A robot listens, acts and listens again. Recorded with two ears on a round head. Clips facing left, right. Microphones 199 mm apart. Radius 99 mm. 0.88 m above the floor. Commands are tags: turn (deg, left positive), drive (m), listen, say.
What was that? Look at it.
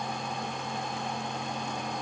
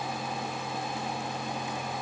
<listen/>
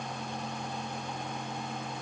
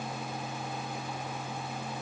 <listen/>
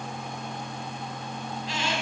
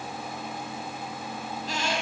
<turn deg="-40"/>
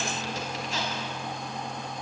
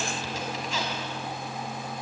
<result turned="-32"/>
<listen/>
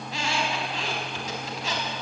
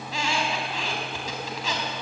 <turn deg="-105"/>
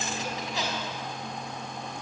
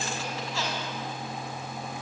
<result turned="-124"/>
<turn deg="15"/>
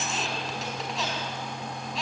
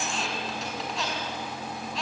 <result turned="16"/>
<say>Facing the squeak, over 4 m away.</say>